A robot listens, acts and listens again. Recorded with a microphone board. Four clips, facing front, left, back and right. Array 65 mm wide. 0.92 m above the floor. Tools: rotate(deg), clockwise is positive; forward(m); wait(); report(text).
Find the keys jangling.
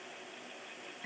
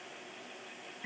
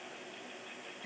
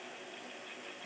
wait()
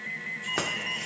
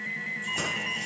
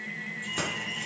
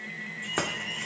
rotate(50)
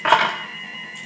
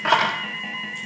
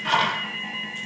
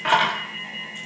rotate(-15)
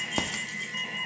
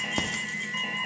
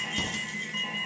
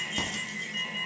rotate(-30)
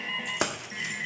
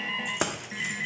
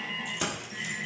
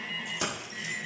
rotate(-40)
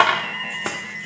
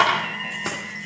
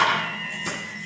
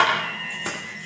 rotate(-10)
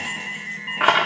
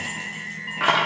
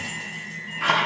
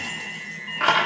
report("Facing the keys jangling, 1 to 2 m away.")